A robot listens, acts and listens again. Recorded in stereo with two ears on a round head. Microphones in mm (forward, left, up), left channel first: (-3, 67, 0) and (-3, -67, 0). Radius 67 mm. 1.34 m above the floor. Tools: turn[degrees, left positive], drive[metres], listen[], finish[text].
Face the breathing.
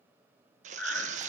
Action: turn[30]
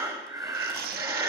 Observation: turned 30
Thought: So it is at 20° right.
Action: turn[-20]
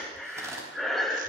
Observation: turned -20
Action: finish[Found it: breathing, straight ahead.]